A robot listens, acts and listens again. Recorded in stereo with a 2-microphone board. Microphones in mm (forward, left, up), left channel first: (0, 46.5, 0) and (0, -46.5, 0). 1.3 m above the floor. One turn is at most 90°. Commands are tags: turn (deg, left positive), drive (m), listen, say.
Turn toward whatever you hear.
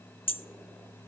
<turn deg="90"/>
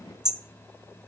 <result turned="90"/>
<turn deg="-10"/>
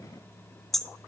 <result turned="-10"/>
<say>Found it: hammering, straight ahead.</say>